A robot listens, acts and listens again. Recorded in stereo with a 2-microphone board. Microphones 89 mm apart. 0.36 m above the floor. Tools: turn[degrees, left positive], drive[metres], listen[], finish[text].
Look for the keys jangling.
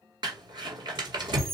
Action: listen[]
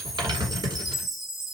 Action: listen[]
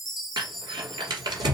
Action: finish[I can't make out keys jangling, only crumpling and a chime.]